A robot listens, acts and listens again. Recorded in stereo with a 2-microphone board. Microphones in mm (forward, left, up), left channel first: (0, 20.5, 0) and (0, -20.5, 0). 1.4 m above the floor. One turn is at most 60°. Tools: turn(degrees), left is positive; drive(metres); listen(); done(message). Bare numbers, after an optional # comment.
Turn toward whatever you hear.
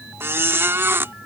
# The squeak: about 70° right or 110° right.
turn(-60)
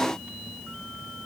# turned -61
listen()
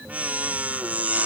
# So it is at 40° right.
turn(-40)
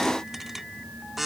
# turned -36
done("Found it: a squeak, straight ahead.")